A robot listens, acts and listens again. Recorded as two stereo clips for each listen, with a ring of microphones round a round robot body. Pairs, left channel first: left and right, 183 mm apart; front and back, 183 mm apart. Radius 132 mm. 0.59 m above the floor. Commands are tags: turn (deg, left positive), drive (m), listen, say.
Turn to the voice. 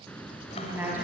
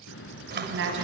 <turn deg="-170"/>
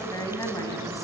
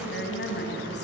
<turn deg="20"/>
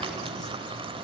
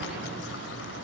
<listen/>
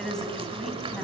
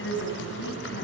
<say>Found it: a woman speaking, straight ahead.</say>